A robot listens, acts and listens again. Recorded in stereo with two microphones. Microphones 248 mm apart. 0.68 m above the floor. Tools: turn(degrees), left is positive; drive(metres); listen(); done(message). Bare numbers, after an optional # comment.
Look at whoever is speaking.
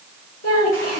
turn(90)
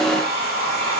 listen()
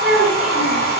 done("Facing the child speaking.")